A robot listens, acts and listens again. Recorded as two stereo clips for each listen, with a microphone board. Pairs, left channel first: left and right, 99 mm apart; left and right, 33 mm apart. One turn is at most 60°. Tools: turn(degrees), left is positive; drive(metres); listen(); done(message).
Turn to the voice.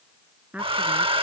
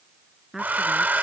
turn(degrees=-30)
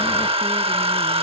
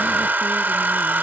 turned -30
listen()
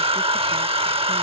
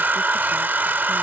listen()
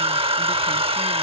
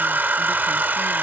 done("I heard a woman speaking, but can't make it out now. It was about 15° left or 135° right.")